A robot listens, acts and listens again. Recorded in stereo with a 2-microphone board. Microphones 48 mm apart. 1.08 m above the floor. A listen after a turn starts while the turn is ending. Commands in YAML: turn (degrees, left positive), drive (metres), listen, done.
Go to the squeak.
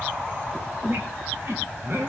turn: -55
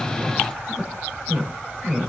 drive: 1.0
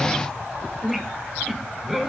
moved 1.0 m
drive: 1.0
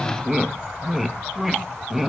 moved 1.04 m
drive: 1.0
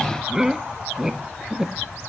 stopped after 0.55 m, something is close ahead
turn: -10
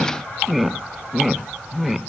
done: "Arrived at the squeak, straight ahead."